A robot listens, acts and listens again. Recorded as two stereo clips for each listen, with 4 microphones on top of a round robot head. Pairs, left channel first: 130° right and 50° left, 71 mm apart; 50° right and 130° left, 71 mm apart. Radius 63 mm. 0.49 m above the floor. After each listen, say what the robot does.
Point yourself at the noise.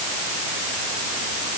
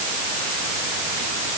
Keep listening.
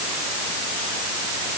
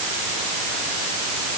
Keep listening.
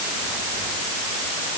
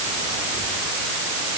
I can't make out anything.